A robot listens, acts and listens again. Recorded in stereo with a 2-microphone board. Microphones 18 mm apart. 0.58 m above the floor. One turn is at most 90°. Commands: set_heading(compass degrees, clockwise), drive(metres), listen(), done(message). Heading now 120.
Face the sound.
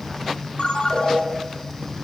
set_heading(55)
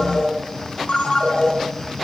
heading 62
set_heading(2)
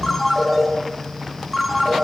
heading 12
set_heading(2)
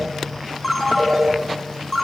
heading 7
done("Facing the ringtone.")